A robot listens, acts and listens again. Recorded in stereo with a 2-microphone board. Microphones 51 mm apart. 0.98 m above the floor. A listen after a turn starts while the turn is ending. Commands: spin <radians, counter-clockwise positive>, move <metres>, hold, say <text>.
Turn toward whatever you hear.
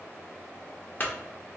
spin 0.61
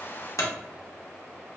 spin 1.83
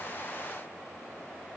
say Facing where the clunk came from. I can't hear it now.